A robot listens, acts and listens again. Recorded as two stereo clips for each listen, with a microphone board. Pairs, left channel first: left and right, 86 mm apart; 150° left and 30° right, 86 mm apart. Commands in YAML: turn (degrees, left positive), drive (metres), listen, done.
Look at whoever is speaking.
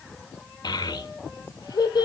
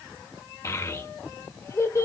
turn: 105
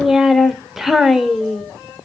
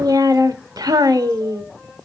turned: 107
done: "Found it: a child speaking, straight ahead, under 1 m away."